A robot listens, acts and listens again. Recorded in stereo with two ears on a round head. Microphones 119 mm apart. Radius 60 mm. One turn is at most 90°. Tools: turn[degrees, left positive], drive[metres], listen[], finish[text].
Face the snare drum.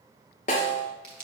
Thought: The snare drum: about 50° left or 130° left.
Action: turn[50]
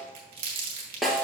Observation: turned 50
Action: finish[Facing the snare drum.]